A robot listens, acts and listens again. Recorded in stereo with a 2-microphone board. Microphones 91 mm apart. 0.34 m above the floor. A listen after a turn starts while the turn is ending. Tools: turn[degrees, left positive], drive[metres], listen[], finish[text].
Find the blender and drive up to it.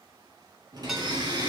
Thought: The blender: about 55° right or 125° right.
Action: turn[-55]
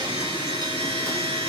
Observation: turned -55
Thought: So it is at 65° right.
Action: turn[-65]
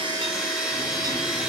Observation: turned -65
Action: drive[1.0]
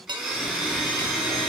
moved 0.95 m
Action: drive[1.0]
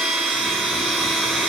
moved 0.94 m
Action: drive[1.0]
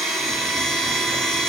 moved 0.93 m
Action: drive[1.0]
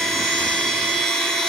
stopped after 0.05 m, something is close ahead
Action: finish[Arrived at the blender, straight ahead.]